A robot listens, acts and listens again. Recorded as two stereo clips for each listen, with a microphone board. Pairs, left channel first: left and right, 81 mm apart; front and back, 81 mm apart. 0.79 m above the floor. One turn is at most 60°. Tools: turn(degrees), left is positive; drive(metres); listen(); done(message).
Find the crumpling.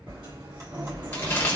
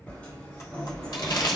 turn(degrees=30)
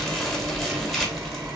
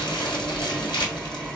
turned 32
done("Facing the crumpling.")